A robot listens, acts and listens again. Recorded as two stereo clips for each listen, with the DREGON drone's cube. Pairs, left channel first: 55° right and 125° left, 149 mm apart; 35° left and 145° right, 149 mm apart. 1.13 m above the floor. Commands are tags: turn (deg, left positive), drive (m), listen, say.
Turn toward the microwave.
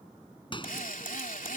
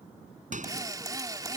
<turn deg="-115"/>
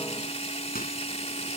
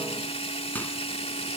<listen/>
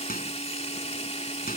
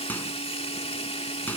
<turn deg="-45"/>
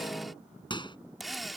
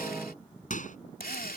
<say>Found it: a microwave, straight ahead.</say>